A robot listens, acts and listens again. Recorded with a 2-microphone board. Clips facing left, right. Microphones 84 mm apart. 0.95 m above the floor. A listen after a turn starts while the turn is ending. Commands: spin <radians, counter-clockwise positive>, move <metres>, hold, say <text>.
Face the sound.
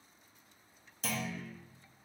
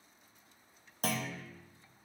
spin -0.87
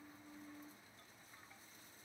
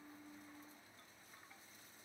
hold
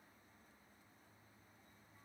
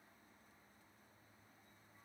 say I heard a clunk, but can't make it out now. It was about straight ahead or 80° right.